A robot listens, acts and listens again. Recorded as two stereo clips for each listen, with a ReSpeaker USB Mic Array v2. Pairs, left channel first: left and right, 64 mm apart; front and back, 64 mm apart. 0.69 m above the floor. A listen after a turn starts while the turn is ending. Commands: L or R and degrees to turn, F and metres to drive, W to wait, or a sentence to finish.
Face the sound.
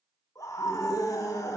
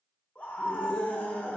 L65
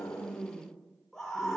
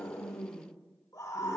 L10
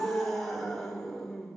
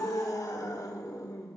Found it: a scream, straight ahead.